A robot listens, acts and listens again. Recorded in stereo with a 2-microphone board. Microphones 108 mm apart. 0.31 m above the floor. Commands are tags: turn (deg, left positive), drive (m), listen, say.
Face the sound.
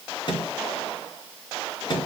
<turn deg="45"/>
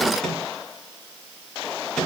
<say>Found it: a microwave, straight ahead.</say>